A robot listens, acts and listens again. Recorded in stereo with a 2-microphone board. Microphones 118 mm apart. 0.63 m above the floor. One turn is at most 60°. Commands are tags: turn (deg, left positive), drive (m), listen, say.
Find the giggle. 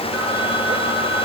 <listen/>
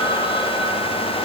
<listen/>
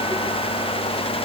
<say>I can't make out a giggle.</say>